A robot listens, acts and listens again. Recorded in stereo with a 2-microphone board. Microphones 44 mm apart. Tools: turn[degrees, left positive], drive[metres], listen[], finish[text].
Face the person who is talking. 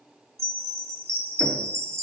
Action: listen[]
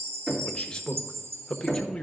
Thought: The man speaking: about 20° left or 160° left.
Action: turn[20]
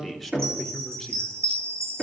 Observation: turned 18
Action: finish[Facing the man speaking, 1 to 2 m away.]